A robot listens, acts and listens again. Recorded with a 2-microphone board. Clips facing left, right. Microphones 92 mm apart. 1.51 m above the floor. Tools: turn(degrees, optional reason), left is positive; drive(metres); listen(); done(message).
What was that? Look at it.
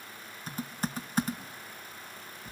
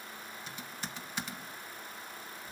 turn(degrees=40, reason="The typing on a keyboard: about 40° left or 140° left.")
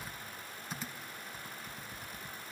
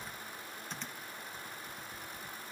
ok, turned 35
done("Found it: typing on a keyboard, straight ahead, 1 to 2 m away.")